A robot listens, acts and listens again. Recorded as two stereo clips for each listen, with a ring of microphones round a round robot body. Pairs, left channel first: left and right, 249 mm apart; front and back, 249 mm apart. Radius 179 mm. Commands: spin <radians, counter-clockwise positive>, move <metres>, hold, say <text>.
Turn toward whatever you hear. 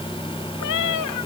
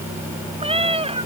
spin 2.01
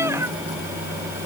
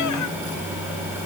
hold
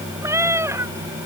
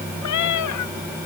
spin -0.17
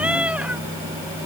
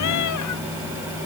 hold
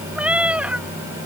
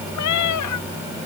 say Facing the cat meowing.